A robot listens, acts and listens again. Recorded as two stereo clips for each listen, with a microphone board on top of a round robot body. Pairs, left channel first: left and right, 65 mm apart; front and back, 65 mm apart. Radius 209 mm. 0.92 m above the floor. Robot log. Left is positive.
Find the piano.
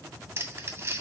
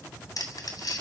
cmd idle
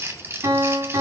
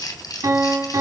note: The piano: 140° right.
cmd yaw -140
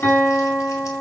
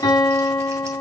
note: The piano is now 25° left.
cmd yaw +25
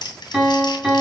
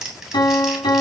note: The piano is now 10° right.
cmd yaw -10
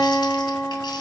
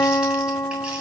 end: Facing the piano, 2 to 4 m away.